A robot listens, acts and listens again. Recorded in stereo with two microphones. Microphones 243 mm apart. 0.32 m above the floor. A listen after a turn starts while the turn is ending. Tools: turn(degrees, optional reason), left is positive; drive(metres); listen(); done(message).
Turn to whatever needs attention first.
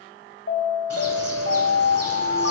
turn(degrees=60, reason="The alarm: about 60° left or 120° left.")
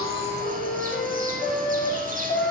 turn(degrees=35, reason="So it is at 35° left.")
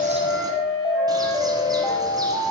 turn(degrees=15, reason="The alarm is now 15° left.")
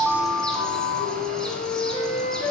done("Facing the alarm.")